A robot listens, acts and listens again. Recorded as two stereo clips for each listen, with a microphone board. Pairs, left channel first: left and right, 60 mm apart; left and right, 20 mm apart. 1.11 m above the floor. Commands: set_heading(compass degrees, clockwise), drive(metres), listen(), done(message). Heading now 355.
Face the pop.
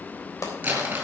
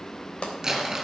set_heading(290)
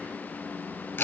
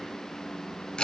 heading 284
listen()
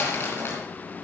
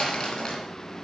done("I heard a pop, but can't make it out now. It was about 5° right or 45° left.")